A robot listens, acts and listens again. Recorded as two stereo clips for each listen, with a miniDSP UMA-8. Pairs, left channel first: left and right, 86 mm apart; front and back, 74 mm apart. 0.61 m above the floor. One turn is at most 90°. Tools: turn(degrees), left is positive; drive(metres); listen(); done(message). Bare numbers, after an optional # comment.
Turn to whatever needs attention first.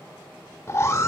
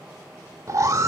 # The alarm: 140° left.
turn(90)
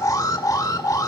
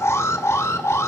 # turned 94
# The alarm is now 45° left.
turn(45)
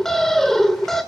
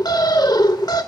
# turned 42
done("Facing the alarm.")